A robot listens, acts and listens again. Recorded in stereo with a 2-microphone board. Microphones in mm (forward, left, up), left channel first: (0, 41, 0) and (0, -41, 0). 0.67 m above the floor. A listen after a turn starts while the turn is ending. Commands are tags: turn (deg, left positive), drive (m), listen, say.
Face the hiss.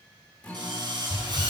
<turn deg="50"/>
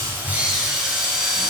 <listen/>
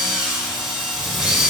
<listen/>
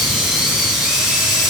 <say>I heard a hiss, but can't make it out now. It was about straight ahead or 80° left.</say>